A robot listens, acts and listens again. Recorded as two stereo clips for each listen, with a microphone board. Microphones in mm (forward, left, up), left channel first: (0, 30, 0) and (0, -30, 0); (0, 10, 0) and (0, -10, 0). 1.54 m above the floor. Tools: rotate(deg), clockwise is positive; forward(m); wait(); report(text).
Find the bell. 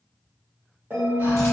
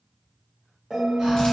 rotate(50)
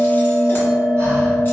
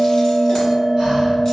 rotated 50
report("Found it: a bell, straight ahead, 1 to 2 m away.")